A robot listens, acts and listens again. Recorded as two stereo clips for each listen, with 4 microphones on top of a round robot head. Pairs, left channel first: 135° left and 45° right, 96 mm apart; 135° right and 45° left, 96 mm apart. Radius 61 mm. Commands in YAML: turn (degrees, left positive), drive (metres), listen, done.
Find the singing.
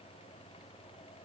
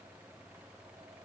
listen: true
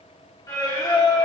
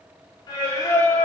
turn: 175
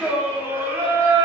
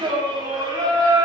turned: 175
done: "Found it: singing, straight ahead, 1 to 2 m away."